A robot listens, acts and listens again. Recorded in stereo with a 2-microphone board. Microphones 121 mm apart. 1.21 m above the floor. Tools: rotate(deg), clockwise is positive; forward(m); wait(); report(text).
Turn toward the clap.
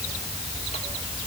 wait()
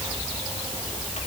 wait()
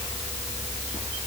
report("I can't make out a clap to turn to.")